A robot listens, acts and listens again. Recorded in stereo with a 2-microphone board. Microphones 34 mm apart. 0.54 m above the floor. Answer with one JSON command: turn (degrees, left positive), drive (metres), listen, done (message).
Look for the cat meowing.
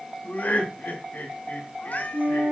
{"turn": 60}
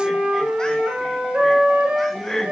{"listen": true}
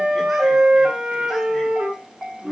{"listen": true}
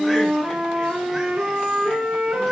{"done": "I heard a cat meowing, but can't make it out now. It was about straight ahead or 60° left."}